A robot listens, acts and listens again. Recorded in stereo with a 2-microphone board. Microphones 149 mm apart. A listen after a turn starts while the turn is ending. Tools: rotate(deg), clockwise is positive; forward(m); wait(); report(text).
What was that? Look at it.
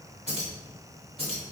rotate(40)
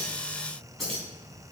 report("Facing the keys jangling.")